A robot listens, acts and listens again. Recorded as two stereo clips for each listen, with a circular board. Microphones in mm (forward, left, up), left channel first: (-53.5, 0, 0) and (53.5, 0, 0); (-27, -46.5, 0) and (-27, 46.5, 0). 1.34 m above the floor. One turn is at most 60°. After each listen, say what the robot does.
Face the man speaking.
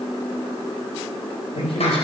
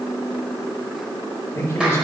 Turn 60° right.
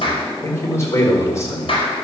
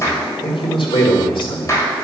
Turn 60° right.
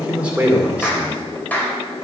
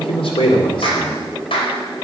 Turn 60° right.
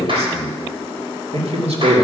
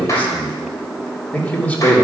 Turn 15° right.
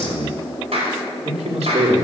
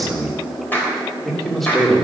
Found it: a man speaking, straight ahead, 2 to 4 m away.